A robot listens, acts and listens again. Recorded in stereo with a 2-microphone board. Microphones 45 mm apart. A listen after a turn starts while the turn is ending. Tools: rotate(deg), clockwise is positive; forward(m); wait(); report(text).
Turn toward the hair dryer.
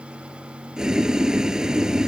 wait()
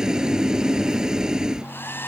rotate(-55)
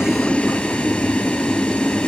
wait()
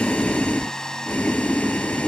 rotate(-15)
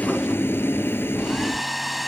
report("Facing the hair dryer.")